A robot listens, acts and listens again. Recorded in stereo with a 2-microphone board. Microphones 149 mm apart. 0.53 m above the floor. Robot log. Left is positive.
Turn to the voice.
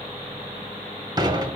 cmd idle
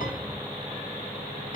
cmd idle
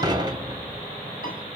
end: I can't make out anyone speaking to turn to.